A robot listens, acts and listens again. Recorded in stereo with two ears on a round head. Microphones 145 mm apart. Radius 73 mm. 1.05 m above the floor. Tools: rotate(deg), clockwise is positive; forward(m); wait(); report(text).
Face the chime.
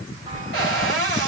rotate(50)
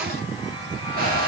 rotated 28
wait()
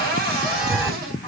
rotate(20)
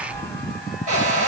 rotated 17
report("Facing the chime.")